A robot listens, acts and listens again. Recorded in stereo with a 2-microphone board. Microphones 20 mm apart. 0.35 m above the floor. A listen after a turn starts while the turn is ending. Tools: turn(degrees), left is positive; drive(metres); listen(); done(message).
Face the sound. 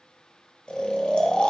turn(degrees=60)
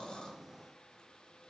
listen()
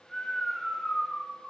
turn(degrees=30)
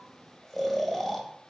turn(degrees=15)
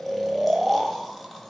done("Facing the snoring, 1 to 2 m away.")